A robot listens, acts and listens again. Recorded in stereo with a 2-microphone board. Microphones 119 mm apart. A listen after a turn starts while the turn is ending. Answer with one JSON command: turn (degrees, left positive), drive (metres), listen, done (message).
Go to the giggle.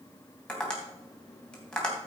{"listen": true}
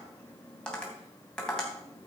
{"listen": true}
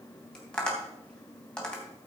{"done": "I can't make out a giggle to turn to."}